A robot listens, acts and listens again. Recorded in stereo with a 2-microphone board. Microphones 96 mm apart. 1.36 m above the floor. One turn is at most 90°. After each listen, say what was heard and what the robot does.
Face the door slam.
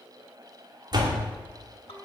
The door slam: about 50° right or 130° right. Turn 50° right.
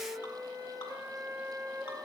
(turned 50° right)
Keep listening.
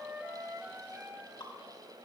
I heard a door slam, but can't make it out now. It was about straight ahead or 80° right.